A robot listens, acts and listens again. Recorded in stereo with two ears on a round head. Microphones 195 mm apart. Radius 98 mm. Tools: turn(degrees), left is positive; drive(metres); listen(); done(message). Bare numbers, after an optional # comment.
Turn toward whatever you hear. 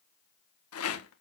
# The rattle: about 70° left or 110° left.
turn(70)
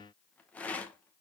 done("Found it: a rattle, straight ahead.")